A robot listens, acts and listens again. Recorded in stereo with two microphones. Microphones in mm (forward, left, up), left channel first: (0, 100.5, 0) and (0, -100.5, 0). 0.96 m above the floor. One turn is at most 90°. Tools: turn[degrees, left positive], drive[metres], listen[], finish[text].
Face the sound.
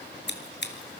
Thought: The scissors: about 65° left or 115° left.
Action: turn[65]
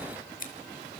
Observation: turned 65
Thought: So it is at 45° left.
Action: turn[45]
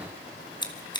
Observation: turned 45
Thought: The scissors is now 25° left.
Action: turn[25]
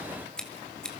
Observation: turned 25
Action: finish[Found it: scissors, straight ahead.]